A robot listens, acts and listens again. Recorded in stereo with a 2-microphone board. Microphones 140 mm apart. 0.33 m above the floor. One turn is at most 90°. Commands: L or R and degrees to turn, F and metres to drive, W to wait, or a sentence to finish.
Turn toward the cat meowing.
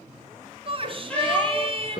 L30
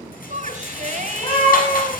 L90
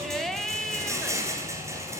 L40
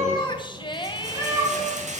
R20
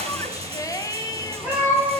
R10
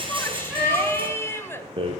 Found it: a cat meowing, straight ahead.